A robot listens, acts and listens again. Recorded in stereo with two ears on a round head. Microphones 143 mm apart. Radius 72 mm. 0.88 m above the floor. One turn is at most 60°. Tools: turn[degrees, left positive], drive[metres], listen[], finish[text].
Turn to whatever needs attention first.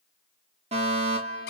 Thought: The fire alarm: about 45° right or 135° right.
Action: turn[-45]
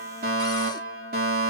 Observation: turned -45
Thought: So it is at 85° right.
Action: turn[-60]
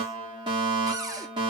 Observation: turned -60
Thought: The fire alarm is now 35° right.
Action: turn[-35]
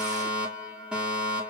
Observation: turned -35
Action: finish[Facing the fire alarm, over 4 m away.]